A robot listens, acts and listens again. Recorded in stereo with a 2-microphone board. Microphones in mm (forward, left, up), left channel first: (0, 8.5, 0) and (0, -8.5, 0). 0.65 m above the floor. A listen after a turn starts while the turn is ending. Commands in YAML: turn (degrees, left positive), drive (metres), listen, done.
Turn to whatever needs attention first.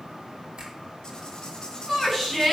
turn: 30
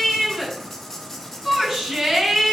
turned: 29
turn: -25
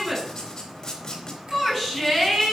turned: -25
done: "Found it: a shout, straight ahead."